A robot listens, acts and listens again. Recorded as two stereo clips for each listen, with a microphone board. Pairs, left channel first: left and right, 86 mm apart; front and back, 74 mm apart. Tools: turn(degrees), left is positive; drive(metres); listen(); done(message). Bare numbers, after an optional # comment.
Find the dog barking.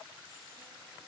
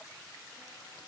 listen()
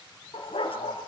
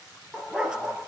# The dog barking: 100° left.
turn(100)
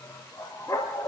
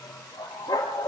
# The dog barking is now 40° left.
turn(40)
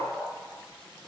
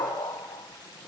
# The dog barking is now 10° left.
turn(10)
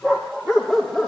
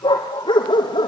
done("Facing the dog barking, 2 to 4 m away.")